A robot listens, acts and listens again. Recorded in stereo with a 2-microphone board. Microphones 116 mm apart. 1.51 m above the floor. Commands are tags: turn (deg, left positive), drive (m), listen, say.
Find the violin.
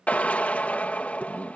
<listen/>
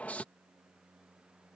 <listen/>
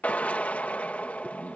<say>I can't make out a violin to turn to.</say>